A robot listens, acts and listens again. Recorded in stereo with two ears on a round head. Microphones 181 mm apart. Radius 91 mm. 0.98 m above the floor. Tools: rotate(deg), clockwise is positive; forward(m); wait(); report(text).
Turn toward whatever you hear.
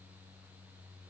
wait()
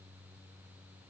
wait()
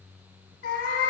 rotate(-50)
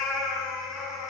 report("Found it: a cat meowing, straight ahead.")